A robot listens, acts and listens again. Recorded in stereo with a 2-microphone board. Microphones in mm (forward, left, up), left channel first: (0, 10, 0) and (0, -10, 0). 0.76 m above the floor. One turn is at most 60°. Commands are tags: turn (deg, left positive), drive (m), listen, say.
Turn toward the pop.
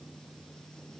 <listen/>
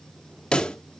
<turn deg="60"/>
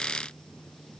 <listen/>
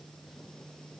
<say>I heard a pop, but can't make it out now. It was about straight ahead or 60° left.</say>